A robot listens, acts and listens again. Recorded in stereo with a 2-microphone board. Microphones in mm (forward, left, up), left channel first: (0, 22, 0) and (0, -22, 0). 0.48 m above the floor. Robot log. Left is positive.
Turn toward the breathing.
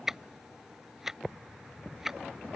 cmd idle
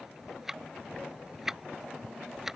cmd idle
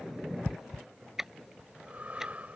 note: The breathing: about 35° right or 145° right.
cmd yaw -35
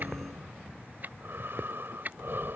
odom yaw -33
note: So it is at 105° right.
cmd yaw -105
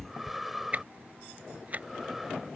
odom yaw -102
end: Found it: breathing, straight ahead.